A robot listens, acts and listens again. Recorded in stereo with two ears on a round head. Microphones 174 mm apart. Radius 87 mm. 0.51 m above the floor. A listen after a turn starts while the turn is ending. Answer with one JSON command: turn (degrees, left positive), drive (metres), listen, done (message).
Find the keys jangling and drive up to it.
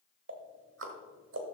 {"listen": true}
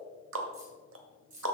{"turn": -40}
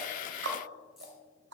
{"listen": true}
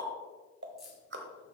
{"drive": 1.0}
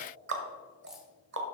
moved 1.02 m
{"listen": true}
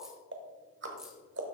{"listen": true}
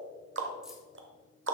{"done": "I heard keys jangling from this way, but can't make it out now. I did not reach it."}